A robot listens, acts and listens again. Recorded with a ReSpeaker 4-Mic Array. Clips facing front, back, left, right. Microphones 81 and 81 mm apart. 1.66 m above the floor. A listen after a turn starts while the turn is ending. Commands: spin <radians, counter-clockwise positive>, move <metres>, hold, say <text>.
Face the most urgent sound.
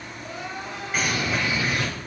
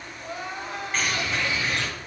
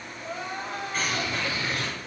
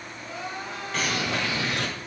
spin 2.44
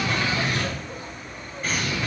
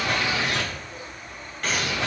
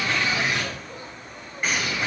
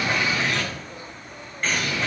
hold
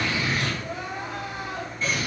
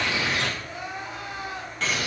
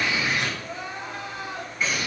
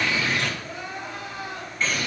spin 0.61
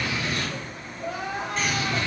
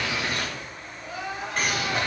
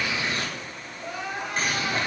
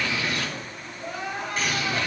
spin 0.17
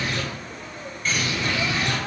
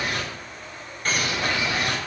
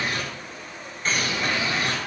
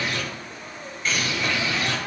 hold
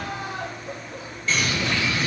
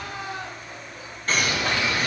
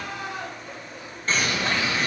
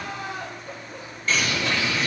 say Facing the crying, 2 to 4 m away.